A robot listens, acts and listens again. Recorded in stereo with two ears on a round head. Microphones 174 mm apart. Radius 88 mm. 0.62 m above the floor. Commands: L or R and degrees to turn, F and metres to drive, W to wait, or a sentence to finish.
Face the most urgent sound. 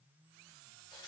W
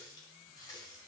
W
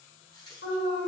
L65
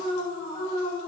L25
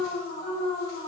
L15
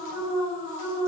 Found it: an alarm, straight ahead, 2 to 4 m away.